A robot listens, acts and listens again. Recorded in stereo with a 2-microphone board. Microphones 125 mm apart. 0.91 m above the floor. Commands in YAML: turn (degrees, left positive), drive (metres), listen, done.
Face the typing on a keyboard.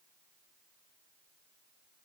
listen: true
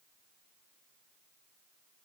listen: true
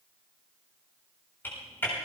turn: 15
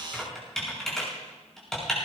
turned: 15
done: "Found it: typing on a keyboard, straight ahead."